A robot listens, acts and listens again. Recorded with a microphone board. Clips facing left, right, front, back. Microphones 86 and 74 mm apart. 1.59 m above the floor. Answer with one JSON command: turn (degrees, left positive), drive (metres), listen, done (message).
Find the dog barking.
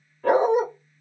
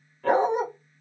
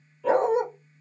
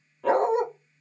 {"turn": 170}
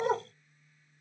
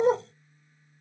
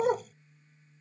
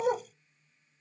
{"turn": 35}
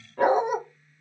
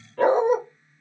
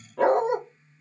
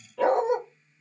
{"turn": 20}
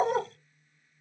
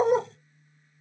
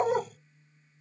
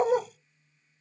{"done": "Found it: a dog barking, straight ahead, 1 to 2 m away."}